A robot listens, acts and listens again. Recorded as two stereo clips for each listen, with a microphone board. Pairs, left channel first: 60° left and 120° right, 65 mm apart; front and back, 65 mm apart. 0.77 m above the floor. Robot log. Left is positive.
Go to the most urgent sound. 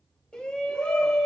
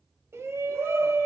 note: The shout: 135° left.
cmd yaw +135
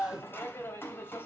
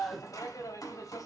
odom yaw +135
note: The shout is now 10° left.
cmd yaw +10
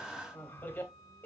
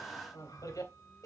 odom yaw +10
cmd fwd 1.0
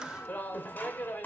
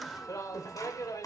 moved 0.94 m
cmd fwd 1.0
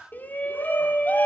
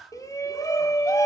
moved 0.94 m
cmd fwd 1.0
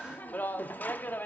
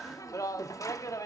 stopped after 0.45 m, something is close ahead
end: I am next to the shout.